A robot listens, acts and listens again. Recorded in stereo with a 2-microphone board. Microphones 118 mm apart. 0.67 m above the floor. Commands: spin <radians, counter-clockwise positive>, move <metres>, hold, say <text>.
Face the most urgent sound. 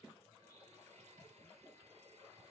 hold
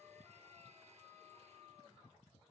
hold
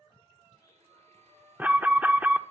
spin -0.52
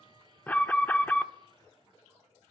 spin 0.26
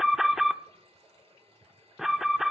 say Facing the alarm.